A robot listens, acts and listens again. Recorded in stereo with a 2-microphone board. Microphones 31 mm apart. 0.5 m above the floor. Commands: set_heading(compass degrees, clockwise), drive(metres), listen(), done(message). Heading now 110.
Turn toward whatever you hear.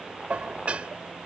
set_heading(155)
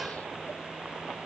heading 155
listen()
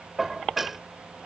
done("Found it: dishes clattering, straight ahead.")